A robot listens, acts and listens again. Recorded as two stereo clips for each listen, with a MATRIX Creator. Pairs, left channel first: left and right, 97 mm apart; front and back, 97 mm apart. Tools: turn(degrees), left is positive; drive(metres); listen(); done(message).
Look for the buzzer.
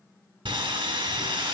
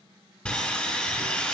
listen()
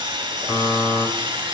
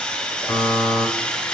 turn(degrees=35)
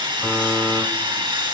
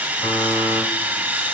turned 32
listen()
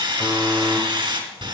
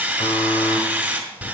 done("Found it: a buzzer, straight ahead.")